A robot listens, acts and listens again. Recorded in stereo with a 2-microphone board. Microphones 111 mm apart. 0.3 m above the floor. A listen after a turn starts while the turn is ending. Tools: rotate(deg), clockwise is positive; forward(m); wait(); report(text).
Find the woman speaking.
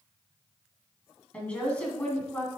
rotate(-30)
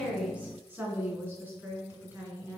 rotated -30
rotate(15)
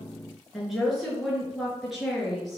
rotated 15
report("Facing the woman speaking, over 4 m away.")